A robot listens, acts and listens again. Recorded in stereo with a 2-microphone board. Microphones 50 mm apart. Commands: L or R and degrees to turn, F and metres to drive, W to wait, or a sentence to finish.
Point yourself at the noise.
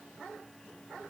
W
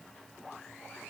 W
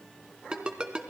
R20
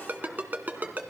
R140
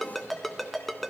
Found it: a ringtone, straight ahead.